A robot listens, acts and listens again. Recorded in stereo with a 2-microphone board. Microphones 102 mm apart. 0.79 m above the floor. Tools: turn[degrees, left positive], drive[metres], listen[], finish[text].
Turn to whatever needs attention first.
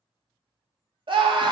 Thought: The scream: about 55° right or 125° right.
Action: turn[-55]
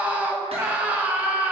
Thought: So it is at 20° right.
Action: turn[-20]
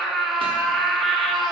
Action: finish[Facing the scream, 1 to 2 m away.]